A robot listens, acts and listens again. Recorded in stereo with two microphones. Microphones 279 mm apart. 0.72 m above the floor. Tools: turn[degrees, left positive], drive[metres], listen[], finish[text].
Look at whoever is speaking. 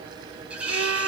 Action: listen[]
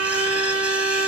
Action: listen[]
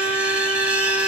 Action: finish[I can't make out anyone speaking to turn to.]